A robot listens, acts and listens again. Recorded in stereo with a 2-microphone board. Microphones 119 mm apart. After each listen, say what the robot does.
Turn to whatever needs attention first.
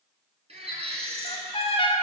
Turn 60° right.
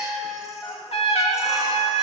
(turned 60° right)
Keep listening.
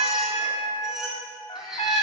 Facing the baby crying, 2 to 4 m away.